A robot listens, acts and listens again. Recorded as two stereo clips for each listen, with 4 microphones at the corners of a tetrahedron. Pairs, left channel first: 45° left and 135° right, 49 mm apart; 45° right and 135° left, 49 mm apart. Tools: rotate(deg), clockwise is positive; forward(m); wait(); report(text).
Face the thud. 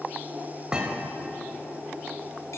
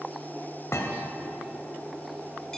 rotate(65)
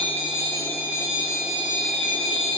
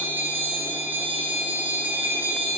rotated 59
report("Facing where the thud came from. I can't hear it now.")